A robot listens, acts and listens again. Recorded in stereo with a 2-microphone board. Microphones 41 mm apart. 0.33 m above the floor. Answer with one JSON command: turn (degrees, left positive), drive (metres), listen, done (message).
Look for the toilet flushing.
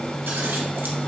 {"listen": true}
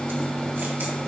{"listen": true}
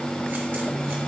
{"done": "I can't make out a toilet flushing to turn to."}